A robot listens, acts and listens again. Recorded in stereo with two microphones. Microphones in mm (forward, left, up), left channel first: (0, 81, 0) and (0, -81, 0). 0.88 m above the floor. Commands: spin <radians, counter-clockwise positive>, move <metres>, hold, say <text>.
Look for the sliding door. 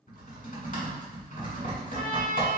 hold
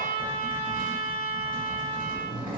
spin -0.52
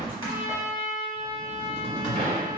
spin -2.27
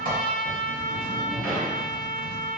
say Facing the sliding door.